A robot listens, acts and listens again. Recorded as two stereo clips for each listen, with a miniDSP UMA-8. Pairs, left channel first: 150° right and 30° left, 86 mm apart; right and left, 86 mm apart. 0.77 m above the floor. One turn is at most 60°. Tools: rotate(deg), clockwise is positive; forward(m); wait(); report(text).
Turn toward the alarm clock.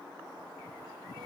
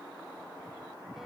wait()
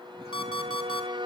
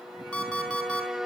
rotate(60)
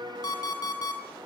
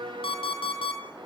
rotate(60)
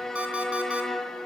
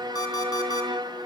rotate(45)
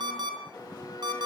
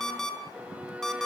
report("Found it: an alarm clock, straight ahead, over 4 m away.")